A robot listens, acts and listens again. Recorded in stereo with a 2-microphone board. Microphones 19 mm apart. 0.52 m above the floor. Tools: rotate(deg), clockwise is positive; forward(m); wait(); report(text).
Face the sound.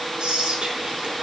rotate(60)
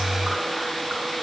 wait()
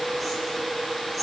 wait()
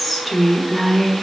report("Facing the whispering, over 4 m away.")